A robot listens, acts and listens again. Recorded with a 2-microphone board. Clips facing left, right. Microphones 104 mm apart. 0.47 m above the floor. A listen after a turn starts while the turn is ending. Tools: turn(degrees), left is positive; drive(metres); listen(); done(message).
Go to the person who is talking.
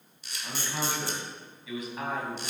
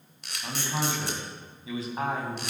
turn(degrees=-30)
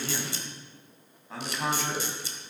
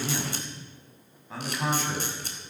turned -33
drive(metres=1.0)
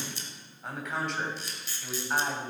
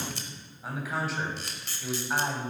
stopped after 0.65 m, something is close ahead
done("Blocked. The man speaking is further on, straight ahead.")